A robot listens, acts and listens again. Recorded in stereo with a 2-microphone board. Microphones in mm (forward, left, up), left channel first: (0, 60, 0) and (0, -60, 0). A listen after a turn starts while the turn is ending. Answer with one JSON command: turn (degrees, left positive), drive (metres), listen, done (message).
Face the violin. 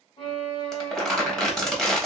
{"turn": 45}
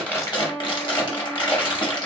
{"turn": 10}
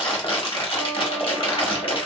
{"listen": true}
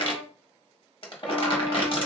{"listen": true}
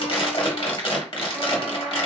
{"done": "I heard a violin from this way, but can't make it out now."}